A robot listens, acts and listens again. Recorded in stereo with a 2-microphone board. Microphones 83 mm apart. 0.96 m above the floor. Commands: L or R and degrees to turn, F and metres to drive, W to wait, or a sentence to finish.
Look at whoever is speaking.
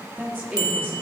R20
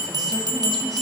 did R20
W
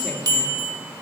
W
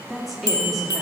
Facing the woman speaking.